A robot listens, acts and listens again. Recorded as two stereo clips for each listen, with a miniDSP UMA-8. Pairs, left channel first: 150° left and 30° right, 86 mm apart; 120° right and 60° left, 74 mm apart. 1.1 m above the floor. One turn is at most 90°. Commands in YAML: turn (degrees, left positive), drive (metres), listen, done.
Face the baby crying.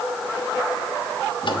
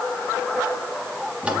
listen: true
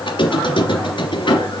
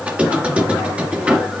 listen: true
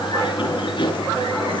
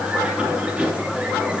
done: "I can't make out a baby crying to turn to."